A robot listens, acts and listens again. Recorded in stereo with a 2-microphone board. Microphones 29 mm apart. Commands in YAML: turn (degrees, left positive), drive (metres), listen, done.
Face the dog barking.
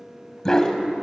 turn: 20
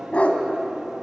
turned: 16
turn: 135
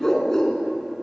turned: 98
turn: 20
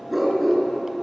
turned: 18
done: "Found it: a dog barking, straight ahead."